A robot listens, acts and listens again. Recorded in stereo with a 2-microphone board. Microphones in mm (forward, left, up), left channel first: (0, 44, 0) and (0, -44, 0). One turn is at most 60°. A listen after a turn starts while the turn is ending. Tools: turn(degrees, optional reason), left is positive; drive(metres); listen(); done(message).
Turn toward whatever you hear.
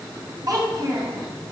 turn(degrees=-45, reason="The child speaking: about 45° right or 135° right.")
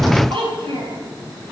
turn(degrees=-60, reason="So it is at 90° right.")
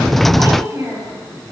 turn(degrees=-30, reason="The child speaking is now 30° right.")
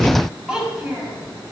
done("Facing the child speaking, over 4 m away.")